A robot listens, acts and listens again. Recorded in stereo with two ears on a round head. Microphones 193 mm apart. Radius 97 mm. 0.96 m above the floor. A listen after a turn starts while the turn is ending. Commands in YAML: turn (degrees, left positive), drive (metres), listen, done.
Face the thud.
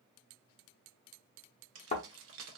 turn: 35
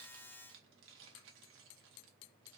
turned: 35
listen: true
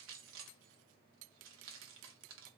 done: "I heard a thud, but can't make it out now. It was about straight ahead or 110° left."